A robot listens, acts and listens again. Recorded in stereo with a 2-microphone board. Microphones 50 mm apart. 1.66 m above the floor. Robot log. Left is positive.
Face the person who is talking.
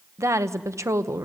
cmd yaw -90
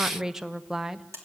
note: So it is at 10° right.
cmd yaw -10
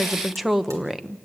end: Found it: a woman speaking, straight ahead.